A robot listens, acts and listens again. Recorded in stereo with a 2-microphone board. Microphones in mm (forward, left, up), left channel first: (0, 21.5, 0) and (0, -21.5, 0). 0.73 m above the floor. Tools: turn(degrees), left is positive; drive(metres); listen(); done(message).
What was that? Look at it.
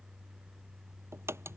turn(degrees=-90)
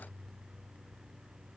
done("I heard a crack from this way, but can't make it out now.")